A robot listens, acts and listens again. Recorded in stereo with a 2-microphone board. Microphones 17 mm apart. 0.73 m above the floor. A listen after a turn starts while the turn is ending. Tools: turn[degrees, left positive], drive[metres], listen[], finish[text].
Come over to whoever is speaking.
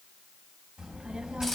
Thought: The child speaking: about 70° right or 110° right.
Action: turn[-70]
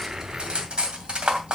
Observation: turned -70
Action: drive[1.0]
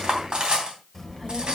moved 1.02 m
Action: drive[1.0]
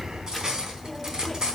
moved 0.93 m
Action: drive[1.0]
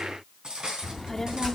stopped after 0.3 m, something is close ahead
Thought: The child speaking is now 20° left.
Action: turn[20]
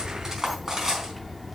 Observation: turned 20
Action: finish[I am next to the child speaking.]